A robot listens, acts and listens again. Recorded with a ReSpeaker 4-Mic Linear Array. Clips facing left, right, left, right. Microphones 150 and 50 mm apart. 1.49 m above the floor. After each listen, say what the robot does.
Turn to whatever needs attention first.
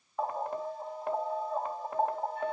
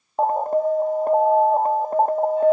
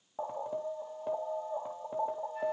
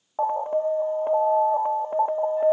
Turn 45° right.
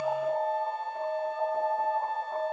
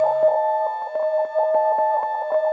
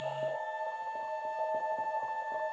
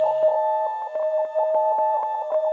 Turn 90° right.
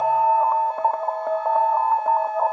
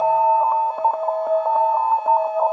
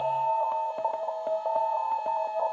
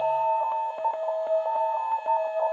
Found it: an alarm, straight ahead, under 1 m away.